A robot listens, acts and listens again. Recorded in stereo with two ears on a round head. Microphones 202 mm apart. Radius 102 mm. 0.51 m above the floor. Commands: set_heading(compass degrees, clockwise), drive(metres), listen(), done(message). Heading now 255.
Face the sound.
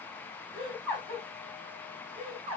set_heading(280)
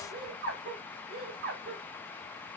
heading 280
set_heading(50)
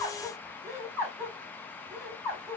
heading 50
done("Found it: laughter, straight ahead, 1 to 2 m away.")